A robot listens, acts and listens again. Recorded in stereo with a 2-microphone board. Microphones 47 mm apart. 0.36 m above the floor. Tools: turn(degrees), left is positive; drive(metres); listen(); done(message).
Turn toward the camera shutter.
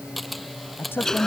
turn(degrees=30)
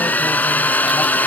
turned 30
listen()
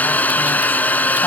listen()
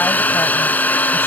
done("I heard a camera shutter, but can't make it out now. It was about 30° right or 150° left.")